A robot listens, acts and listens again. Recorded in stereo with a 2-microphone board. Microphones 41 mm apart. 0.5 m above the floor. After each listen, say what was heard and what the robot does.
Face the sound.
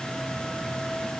Keep listening.
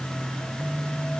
The phone buzzing: about 60° left or 120° left. Turn 60° left.
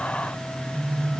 So it is at 50° left. Turn 50° left.
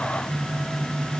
The phone buzzing is now 10° left. Turn 10° left.
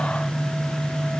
Found it: a phone buzzing, straight ahead.